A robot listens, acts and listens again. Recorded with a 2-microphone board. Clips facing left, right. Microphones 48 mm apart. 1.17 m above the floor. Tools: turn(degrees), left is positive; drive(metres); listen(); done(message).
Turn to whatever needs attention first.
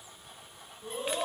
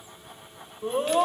turn(degrees=-50)
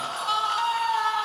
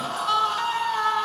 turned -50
done("Facing the scream, 1 to 2 m away.")